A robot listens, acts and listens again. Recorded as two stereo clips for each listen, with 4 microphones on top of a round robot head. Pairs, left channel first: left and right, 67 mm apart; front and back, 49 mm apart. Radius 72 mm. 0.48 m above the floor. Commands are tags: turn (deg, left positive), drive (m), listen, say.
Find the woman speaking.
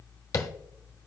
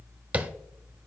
<listen/>
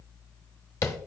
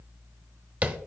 <listen/>
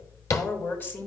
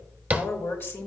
<turn deg="35"/>
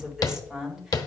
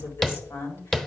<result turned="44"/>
<turn deg="-10"/>
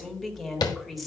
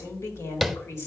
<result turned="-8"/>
<say>Found it: a woman speaking, straight ahead, 1 to 2 m away.</say>